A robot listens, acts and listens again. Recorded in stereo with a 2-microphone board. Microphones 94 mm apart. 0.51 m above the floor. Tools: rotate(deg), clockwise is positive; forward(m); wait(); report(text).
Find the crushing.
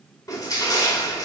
rotate(-40)
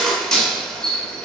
rotate(-10)
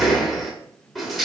report("Found it: crushing, straight ahead, 2 to 4 m away.")